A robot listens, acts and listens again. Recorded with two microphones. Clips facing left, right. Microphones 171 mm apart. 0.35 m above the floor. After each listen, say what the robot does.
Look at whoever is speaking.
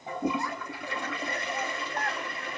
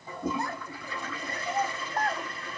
Turn 35° right.
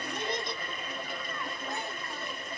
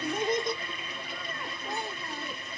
Turn 130° right.
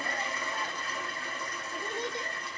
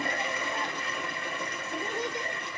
Turn 15° right.
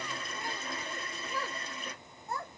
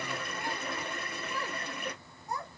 Facing the child speaking, 1 to 2 m away.